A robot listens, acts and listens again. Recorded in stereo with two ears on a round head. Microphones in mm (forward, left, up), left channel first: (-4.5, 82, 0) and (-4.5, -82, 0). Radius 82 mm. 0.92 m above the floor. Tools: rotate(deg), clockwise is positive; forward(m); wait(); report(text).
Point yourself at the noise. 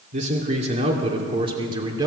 rotate(20)
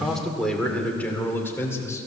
rotate(-15)
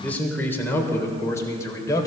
rotate(-20)
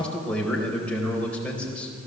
report("Found it: a man speaking, straight ahead.")